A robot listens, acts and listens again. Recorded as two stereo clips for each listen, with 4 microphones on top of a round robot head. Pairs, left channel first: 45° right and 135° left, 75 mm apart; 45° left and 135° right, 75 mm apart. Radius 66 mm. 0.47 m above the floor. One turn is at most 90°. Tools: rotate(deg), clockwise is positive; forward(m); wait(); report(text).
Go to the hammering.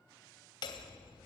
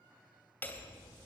rotate(25)
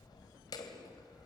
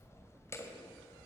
rotate(10)
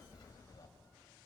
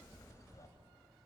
forward(1.0)
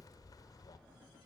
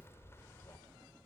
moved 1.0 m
rotate(10)
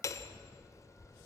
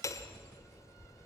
forward(1.0)
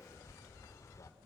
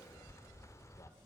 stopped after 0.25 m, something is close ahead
report("Arrived at the hammering, straight ahead.")